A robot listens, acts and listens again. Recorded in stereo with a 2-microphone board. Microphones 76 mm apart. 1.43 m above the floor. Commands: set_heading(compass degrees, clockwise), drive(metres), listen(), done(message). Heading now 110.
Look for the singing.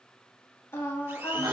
set_heading(70)
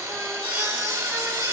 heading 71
listen()
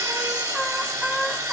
done("Found it: singing, straight ahead, 1 to 2 m away.")